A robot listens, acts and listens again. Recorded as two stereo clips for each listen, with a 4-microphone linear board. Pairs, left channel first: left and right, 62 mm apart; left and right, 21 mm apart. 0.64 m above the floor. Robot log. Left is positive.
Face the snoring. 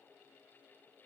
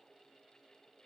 cmd idle
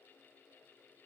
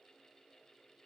cmd idle
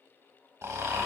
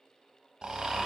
note: The snoring: about 50° right or 130° right.
cmd yaw -50
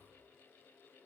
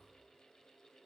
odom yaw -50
cmd idle
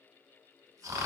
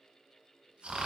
note: So it is at 75° right.
cmd yaw -75
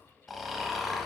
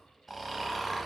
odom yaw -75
end: Facing the snoring.